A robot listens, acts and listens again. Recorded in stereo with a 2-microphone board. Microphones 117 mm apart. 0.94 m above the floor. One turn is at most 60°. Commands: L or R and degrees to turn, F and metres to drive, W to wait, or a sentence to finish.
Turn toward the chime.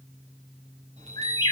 R60
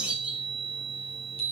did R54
R55
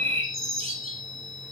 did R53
Facing the chime, over 4 m away.